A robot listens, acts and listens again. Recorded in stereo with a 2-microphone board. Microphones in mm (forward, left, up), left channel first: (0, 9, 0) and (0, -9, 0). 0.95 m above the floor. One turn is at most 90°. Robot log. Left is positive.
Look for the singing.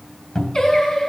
note: The singing: about 50° left or 130° left.
cmd yaw +50
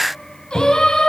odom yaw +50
note: So it is at 75° left.
cmd yaw +75
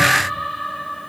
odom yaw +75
end: Found it: singing, straight ahead, 2 to 4 m away.